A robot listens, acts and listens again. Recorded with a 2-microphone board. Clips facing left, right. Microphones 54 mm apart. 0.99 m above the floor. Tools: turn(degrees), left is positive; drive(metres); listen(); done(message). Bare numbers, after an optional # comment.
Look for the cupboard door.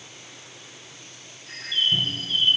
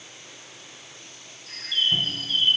turn(-30)
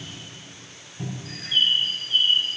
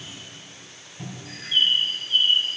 # So it is at 15° left.
turn(15)
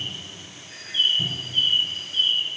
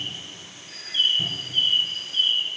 done("Found it: a cupboard door, straight ahead, 2 to 4 m away.")